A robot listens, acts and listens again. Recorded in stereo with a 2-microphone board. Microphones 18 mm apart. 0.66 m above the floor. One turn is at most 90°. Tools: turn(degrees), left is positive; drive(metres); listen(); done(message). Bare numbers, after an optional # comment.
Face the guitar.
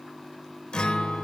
turn(90)
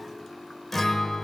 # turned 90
# So it is at 10° left.
turn(10)
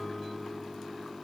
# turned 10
done("Facing the guitar, 1 to 2 m away.")